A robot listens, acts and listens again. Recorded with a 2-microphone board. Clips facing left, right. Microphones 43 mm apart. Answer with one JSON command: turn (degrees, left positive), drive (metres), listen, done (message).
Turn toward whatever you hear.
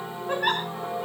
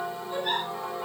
{"turn": 90}
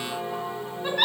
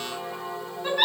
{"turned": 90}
{"done": "Found it: a giggle, straight ahead."}